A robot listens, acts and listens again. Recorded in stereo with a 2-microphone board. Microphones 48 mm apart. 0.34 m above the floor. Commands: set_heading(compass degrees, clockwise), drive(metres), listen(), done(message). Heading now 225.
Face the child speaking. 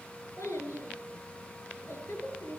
set_heading(135)
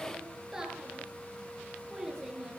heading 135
done("Facing the child speaking.")